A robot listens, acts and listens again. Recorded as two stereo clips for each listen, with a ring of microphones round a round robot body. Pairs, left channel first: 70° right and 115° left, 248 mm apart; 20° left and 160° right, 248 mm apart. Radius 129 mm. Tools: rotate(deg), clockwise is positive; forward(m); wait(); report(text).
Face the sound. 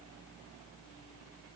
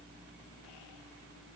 wait()
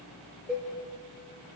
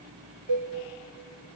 rotate(160)
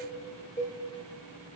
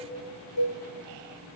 rotate(-15)
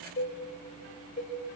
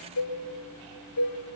report("Found it: a cowbell, straight ahead.")